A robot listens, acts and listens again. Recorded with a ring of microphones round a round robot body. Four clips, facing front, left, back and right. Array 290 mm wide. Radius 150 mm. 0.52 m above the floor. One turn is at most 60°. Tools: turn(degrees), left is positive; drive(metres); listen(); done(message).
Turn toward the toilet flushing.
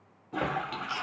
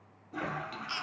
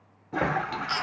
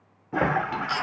turn(degrees=-60)
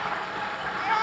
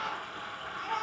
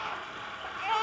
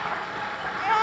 turn(degrees=-45)
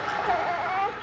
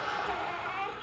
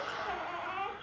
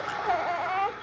done("Found it: a toilet flushing, straight ahead, 1 to 2 m away.")